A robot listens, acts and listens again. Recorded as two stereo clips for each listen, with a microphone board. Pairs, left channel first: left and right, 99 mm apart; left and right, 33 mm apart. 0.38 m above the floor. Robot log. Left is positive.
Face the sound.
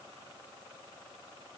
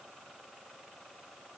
cmd idle
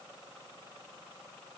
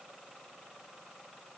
cmd idle
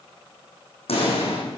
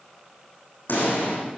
cmd yaw +90
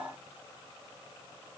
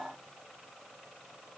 end: I heard a pop from this way, but can't make it out now.